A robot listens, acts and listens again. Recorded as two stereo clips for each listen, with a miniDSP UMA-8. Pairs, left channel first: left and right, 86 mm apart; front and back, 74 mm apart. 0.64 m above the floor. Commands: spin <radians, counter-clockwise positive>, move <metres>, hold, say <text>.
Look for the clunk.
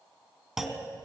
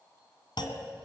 say Found it: a clunk, straight ahead.